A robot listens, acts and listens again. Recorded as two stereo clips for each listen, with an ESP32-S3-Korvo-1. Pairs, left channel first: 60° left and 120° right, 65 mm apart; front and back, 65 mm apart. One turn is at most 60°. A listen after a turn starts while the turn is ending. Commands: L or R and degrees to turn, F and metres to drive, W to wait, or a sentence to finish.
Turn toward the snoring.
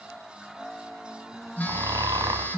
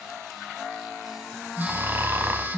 R60
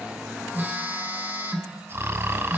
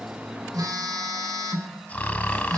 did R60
R60
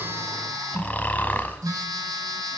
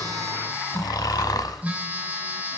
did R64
Found it: snoring, straight ahead, 1 to 2 m away.